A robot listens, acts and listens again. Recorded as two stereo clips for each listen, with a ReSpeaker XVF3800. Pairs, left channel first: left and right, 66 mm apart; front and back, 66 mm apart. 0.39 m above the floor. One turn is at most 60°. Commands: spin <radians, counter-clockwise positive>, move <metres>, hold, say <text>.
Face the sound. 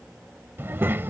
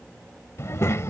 spin -0.70
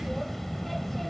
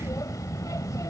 say Facing the child speaking.